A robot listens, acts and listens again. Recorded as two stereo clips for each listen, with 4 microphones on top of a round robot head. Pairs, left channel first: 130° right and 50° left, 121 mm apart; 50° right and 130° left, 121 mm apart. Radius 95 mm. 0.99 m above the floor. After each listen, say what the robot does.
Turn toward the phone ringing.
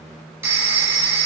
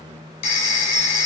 Turn 20° right.
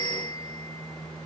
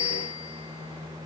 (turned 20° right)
Found it: a phone ringing, straight ahead.